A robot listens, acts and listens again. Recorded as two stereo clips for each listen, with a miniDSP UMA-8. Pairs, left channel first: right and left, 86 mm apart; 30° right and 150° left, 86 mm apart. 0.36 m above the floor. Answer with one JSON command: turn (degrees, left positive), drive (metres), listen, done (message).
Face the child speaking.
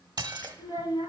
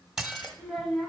{"turn": -120}
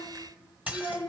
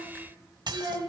{"turn": -25}
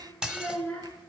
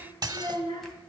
{"turn": -15}
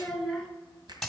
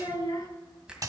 {"done": "Found it: a child speaking, straight ahead."}